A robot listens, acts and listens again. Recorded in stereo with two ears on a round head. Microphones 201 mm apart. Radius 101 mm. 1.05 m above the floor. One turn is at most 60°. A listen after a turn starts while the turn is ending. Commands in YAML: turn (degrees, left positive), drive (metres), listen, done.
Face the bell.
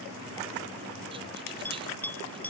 turn: 30
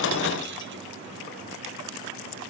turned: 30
listen: true
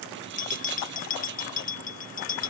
turn: 60
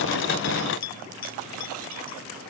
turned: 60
turn: 60
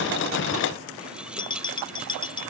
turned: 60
turn: 20
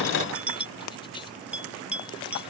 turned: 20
done: "Facing the bell."